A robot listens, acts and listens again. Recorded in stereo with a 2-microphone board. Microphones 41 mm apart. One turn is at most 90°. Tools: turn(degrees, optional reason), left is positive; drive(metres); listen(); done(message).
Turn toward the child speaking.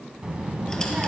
turn(degrees=-35, reason="The child speaking: about 35° right or 145° right.")
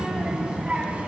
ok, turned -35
turn(degrees=-35, reason="The child speaking: about 35° right or 145° right.")
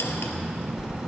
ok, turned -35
turn(degrees=-15, reason="So it is at 15° right.")
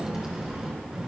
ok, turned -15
turn(degrees=-20, reason="The child speaking is now 20° right.")
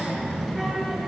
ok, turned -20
done("Facing the child speaking.")